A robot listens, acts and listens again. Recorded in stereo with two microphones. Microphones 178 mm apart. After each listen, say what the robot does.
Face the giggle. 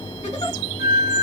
Turn 35° left.
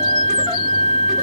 Keep listening.
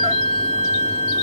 Keep listening.
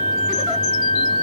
I heard a giggle, but can't make it out now. It was about straight ahead or 110° left.